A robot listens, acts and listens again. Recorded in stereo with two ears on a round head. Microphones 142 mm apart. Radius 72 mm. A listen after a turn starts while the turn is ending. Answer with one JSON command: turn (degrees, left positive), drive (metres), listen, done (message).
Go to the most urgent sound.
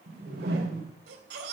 {"turn": -90}
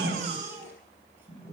{"turn": -15}
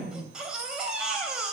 {"drive": 1.0}
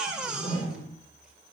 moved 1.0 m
{"drive": 1.0}
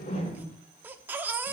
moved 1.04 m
{"turn": -10}
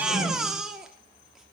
{"drive": 1.0}
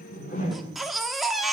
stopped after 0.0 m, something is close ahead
{"done": "Arrived at the baby crying, straight ahead."}